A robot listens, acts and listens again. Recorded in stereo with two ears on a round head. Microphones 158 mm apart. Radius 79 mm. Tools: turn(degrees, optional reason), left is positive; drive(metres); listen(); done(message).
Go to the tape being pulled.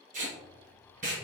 turn(degrees=-45, reason="The tape being pulled: about 45° right or 135° right.")
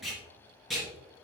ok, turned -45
drive(metres=1.0)
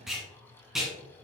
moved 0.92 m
drive(metres=1.0)
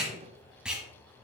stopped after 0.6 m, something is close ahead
done("I am next to the tape being pulled.")